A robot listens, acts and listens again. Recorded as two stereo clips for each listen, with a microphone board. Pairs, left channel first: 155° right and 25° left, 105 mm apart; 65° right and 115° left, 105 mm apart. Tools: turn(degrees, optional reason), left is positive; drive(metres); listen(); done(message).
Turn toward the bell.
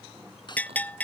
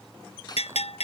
turn(degrees=-80, reason="The bell: 80° right.")
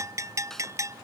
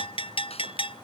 turn(degrees=-35, reason="The bell is now 35° right.")
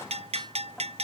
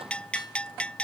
turn(degrees=10, reason="The bell is now 10° left.")
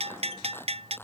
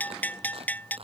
done("Found it: a bell, straight ahead.")